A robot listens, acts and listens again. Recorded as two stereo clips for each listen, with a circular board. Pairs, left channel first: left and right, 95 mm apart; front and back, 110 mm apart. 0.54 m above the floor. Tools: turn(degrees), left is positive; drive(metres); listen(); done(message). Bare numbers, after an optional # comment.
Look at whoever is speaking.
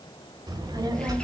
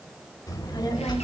# The child speaking: 45° right.
turn(-45)
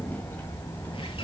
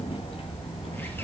# The child speaking is now 25° left.
turn(25)
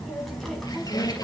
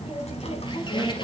done("Found it: a child speaking, straight ahead, 2 to 4 m away.")